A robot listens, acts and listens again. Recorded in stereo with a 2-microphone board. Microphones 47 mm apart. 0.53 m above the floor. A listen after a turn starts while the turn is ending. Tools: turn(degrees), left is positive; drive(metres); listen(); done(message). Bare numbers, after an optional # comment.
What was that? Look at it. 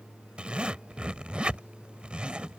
# The zipper: about 25° right or 155° right.
turn(-25)
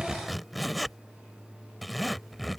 done("Found it: a zipper, straight ahead.")